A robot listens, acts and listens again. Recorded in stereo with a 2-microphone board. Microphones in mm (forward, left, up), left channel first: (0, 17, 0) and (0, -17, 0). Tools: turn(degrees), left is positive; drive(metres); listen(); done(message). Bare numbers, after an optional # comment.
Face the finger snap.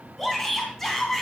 listen()
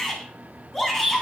listen()
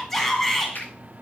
turn(90)
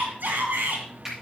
# So it is at 15° right.
turn(-15)
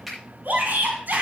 done("Found it: a finger snap, straight ahead, over 4 m away.")